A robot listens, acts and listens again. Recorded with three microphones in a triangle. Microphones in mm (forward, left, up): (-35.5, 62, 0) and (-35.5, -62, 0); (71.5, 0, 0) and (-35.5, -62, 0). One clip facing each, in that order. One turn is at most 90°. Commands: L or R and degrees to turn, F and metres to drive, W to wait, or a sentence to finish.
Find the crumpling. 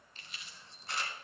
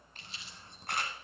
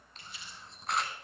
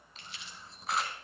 R90
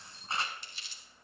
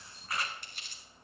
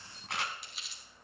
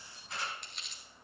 R55
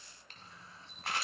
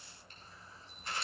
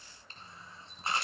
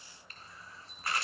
W
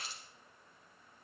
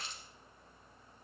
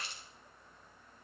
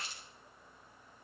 Found it: crumpling, straight ahead, 1 to 2 m away.